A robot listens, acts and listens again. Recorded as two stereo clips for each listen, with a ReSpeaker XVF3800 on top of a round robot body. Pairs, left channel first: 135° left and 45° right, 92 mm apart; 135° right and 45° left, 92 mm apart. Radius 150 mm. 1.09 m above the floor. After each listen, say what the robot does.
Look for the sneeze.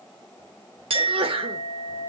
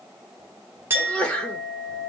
Turn 55° right.
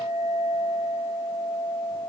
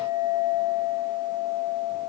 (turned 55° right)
I heard a sneeze from this way, but can't make it out now.